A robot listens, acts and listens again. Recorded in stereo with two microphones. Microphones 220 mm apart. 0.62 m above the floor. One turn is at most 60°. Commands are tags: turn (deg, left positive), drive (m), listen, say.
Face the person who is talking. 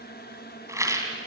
<listen/>
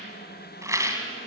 <listen/>
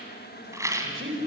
<turn deg="-60"/>
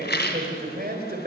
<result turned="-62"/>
<turn deg="-45"/>
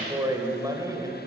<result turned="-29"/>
<turn deg="-15"/>
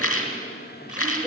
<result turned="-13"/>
<say>Found it: a man speaking, straight ahead.</say>